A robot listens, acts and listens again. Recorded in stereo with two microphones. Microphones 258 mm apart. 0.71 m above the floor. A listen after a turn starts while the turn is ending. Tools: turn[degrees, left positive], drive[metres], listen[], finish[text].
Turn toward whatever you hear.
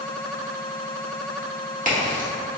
Thought: The crack: about 30° right or 150° right.
Action: turn[-30]
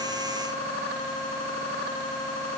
Action: listen[]
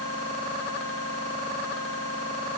Action: finish[I heard a crack, but can't make it out now. It was about straight ahead or 120° right.]